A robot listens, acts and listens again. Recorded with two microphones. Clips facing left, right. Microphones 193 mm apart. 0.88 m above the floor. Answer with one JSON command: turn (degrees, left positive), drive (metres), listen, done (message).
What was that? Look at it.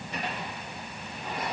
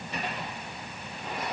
{"listen": true}
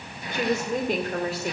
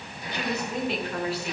{"turn": 45}
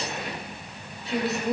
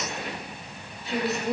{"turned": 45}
{"done": "Found it: a woman speaking, straight ahead, 2 to 4 m away."}